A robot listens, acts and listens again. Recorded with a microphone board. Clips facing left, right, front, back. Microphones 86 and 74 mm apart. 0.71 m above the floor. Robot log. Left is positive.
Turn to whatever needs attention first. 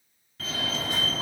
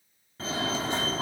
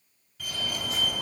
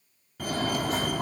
note: The fire alarm: 145° right.
cmd yaw -145
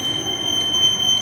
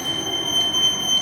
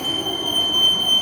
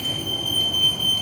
end: Found it: a fire alarm, straight ahead, 2 to 4 m away.